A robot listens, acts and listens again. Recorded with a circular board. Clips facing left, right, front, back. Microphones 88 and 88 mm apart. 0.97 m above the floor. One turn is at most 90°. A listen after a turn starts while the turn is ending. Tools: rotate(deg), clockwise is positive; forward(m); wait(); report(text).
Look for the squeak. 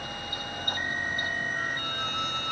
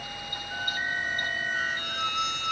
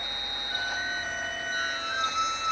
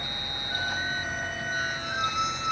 rotate(90)
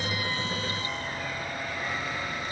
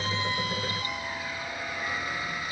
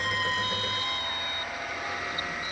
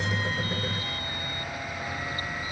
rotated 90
wait()
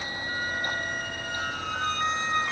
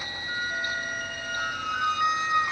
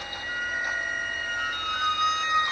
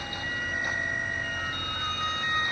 rotate(10)
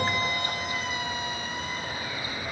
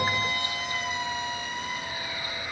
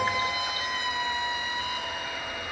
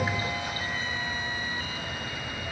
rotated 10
report("Found it: a squeak, straight ahead.")